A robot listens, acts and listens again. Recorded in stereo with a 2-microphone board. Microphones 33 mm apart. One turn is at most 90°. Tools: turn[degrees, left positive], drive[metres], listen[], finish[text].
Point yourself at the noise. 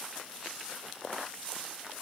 Action: listen[]
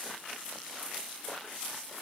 Action: listen[]
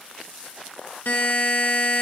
Thought: The buzzer: about 60° left or 120° left.
Action: turn[60]
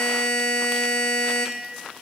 Thought: So it is at 55° left.
Action: turn[55]
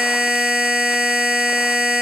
Thought: The buzzer is now 15° right.
Action: turn[-15]
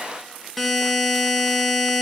Action: finish[Facing the buzzer, under 1 m away.]